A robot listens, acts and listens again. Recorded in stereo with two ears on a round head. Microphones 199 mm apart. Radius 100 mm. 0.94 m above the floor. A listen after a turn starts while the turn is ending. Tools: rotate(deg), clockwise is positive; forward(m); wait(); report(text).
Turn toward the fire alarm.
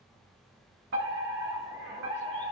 rotate(55)
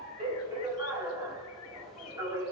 rotate(15)
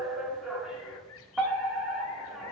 report("Found it: a fire alarm, straight ahead.")